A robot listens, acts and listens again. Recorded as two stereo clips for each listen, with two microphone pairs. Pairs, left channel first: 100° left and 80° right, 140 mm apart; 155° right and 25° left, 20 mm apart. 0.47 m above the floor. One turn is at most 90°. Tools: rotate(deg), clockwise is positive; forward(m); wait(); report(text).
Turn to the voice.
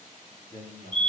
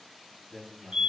rotate(-90)
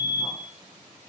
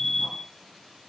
rotate(-25)
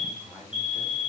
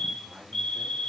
report("Found it: a man speaking, straight ahead.")